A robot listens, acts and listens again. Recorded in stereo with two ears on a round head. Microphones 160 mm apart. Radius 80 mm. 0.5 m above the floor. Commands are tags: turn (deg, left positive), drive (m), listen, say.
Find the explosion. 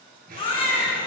<turn deg="-55"/>
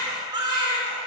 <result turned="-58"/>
<listen/>
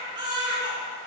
<say>I heard an explosion, but can't make it out now. It was about 5° left or 70° right.</say>